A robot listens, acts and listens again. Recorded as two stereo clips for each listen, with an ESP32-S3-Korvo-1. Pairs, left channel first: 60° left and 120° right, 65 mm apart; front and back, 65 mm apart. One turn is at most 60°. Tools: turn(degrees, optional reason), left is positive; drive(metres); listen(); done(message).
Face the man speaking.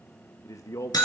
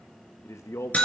turn(degrees=35, reason="The man speaking: 35° left.")
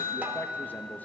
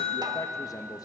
listen()
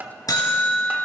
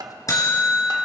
listen()
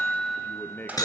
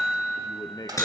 done("Found it: a man speaking, straight ahead.")